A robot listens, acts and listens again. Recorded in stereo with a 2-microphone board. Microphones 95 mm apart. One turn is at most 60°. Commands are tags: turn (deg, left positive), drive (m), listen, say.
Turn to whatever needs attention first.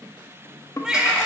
<turn deg="-30"/>
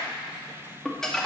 <listen/>
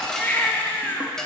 <turn deg="20"/>
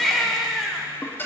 <say>Found it: a baby crying, straight ahead, 1 to 2 m away.</say>